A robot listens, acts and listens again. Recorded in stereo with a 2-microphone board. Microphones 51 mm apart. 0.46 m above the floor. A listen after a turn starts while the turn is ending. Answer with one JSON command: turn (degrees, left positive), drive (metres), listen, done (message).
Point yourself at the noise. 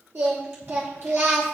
{"turn": -50}
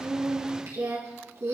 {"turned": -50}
{"turn": -70}
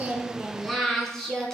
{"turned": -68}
{"turn": 15}
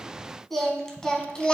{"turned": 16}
{"turn": 20}
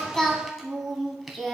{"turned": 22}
{"done": "Found it: singing, straight ahead, 1 to 2 m away."}